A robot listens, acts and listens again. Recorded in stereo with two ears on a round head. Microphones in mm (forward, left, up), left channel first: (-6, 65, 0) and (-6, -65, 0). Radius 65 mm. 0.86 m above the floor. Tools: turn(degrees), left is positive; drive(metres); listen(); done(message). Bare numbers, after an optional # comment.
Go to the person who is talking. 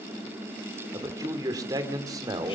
# The man speaking: about 25° right or 155° right.
turn(-25)
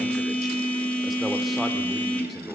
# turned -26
listen()
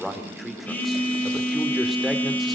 drive(1.0)
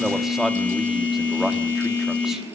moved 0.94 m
drive(1.0)
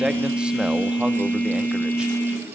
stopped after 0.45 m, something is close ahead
listen()
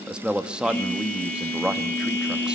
# The man speaking is now 10° right.
turn(-10)
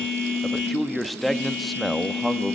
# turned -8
done("Arrived at the man speaking, straight ahead.")